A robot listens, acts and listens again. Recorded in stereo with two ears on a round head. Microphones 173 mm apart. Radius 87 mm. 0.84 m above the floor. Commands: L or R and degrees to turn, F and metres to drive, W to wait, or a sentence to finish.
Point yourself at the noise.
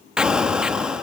R30
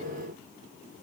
W
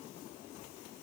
I heard an explosion, but can't make it out now. It was about 25° left or 145° right.